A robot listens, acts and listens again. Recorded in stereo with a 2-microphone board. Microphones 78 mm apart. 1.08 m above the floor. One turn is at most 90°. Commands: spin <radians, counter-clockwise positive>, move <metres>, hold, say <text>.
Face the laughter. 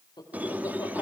spin 1.13
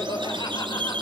spin 1.05
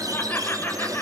spin 0.44
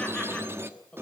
spin 0.26
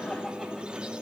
hold
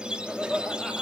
say Found it: laughter, straight ahead.